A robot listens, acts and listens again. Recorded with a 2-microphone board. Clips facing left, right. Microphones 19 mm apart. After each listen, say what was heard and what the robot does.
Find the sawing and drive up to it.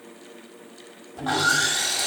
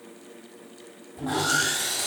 The sawing: about 35° left or 145° left. Turn 35° left.
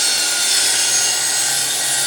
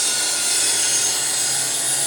So it is at 110° left. Turn 110° left.
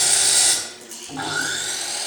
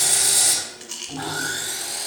The sawing is now 20° left. Turn 20° left.
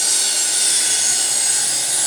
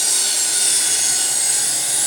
The sawing is now 10° left. Turn 10° left.
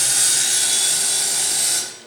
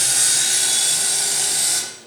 Drive 1.0 m forward.
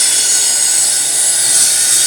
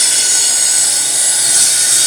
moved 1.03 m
Drive 1.0 m forward.
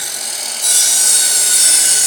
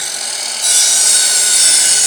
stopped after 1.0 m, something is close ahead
The sawing is now 10° right. Turn 10° right.
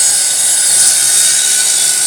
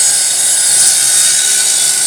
Arrived at the sawing, straight ahead.